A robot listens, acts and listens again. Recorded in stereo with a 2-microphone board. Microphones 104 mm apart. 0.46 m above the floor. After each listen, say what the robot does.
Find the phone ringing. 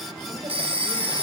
Turn 65° right.
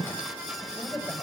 Keep listening.
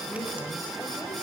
Keep listening.
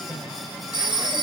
Turn 50° right.
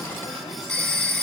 Found it: a phone ringing, straight ahead.